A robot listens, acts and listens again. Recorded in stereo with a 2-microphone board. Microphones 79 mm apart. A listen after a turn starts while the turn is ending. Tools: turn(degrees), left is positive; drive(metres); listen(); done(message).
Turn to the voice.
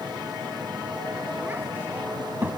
turn(degrees=-25)
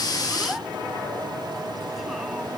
listen()
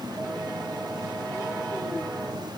listen()
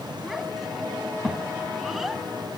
done("Found it: a child speaking, straight ahead, 1 to 2 m away.")